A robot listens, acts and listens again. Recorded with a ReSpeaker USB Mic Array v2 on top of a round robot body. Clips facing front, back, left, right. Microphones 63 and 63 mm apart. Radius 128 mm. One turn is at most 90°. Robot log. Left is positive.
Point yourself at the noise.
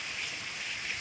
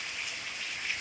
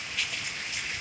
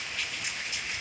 cmd idle
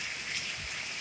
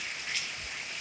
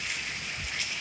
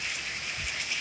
cmd idle
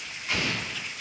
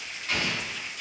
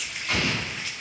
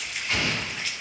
note: The explosion: 80° left.
cmd yaw +80
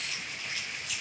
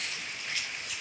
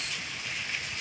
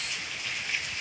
end: I heard an explosion from this way, but can't make it out now.